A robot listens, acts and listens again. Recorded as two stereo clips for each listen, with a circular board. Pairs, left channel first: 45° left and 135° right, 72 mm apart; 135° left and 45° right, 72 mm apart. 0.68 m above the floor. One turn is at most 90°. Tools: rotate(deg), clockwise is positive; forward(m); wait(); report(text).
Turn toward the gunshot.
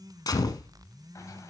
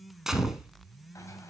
rotate(-40)
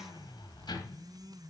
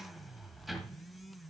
report("Facing where the gunshot came from. I can't hear it now.")